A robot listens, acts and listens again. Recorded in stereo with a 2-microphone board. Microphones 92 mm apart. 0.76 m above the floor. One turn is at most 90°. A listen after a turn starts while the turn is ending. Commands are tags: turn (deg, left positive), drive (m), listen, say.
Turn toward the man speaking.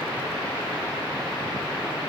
<listen/>
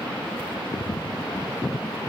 <listen/>
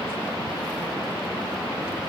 <say>I can't make out a man speaking.</say>